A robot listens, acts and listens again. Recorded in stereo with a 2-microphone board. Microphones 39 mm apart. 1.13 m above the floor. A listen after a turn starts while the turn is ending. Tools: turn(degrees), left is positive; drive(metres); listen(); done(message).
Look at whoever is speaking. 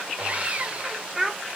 turn(degrees=-30)
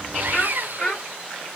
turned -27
turn(degrees=30)
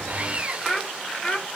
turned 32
turn(degrees=20)
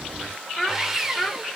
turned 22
turn(degrees=10)
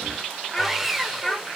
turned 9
turn(degrees=15)
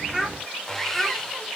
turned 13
done("Facing the child speaking.")